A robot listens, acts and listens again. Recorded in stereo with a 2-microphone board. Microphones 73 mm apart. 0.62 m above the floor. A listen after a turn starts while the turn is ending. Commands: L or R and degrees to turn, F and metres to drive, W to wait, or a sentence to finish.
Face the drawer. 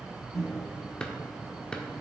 L30
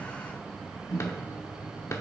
L135
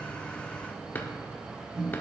L30
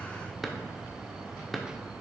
Facing the drawer.